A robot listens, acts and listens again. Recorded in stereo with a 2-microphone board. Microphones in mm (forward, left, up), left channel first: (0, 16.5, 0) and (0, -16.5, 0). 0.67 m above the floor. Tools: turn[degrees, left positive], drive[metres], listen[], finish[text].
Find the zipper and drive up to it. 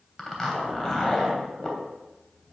Action: turn[30]
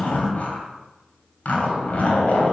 Thought: So it is at 135° left.
Action: turn[135]
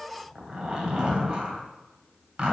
Thought: The zipper is now 25° right.
Action: turn[-25]
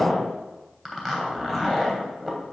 Action: drive[1.0]
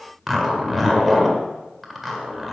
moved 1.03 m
Action: drive[1.0]
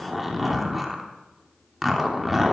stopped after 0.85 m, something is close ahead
Action: finish[I am next to the zipper.]